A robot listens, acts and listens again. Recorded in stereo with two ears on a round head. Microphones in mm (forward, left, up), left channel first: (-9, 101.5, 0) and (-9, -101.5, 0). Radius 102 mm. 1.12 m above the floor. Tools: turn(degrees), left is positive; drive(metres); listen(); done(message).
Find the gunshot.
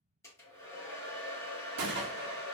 turn(degrees=-50)
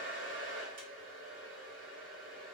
listen()
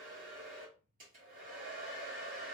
done("I heard a gunshot, but can't make it out now. It was about straight ahead or 80° right.")